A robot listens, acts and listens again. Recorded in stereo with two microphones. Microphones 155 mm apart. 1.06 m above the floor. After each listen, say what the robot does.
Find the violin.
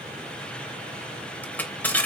Keep listening.
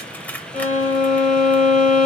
Turn 45° left.
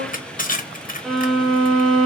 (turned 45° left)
Facing the violin.